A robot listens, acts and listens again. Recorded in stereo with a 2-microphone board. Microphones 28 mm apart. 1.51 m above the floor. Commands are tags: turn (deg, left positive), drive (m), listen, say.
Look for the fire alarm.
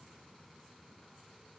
<listen/>
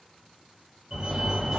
<turn deg="-30"/>
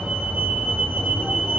<turn deg="-130"/>
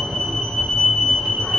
<turn deg="-10"/>
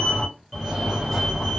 <say>Facing the fire alarm.</say>